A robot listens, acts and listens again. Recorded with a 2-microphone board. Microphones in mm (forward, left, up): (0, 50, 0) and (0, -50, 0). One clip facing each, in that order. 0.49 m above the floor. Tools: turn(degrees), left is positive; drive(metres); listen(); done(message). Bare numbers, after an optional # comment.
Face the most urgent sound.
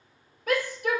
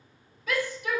# The shout: about 60° left or 120° left.
turn(60)
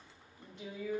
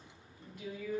# So it is at 35° left.
turn(35)
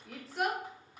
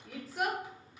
done("Facing the shout.")